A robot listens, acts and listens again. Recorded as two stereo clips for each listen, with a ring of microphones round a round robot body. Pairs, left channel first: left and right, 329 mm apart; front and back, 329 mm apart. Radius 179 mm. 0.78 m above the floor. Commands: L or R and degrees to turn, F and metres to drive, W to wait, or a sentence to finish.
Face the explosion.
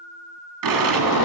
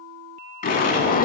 R70
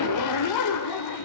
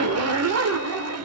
Facing where the explosion came from. I can't hear it now.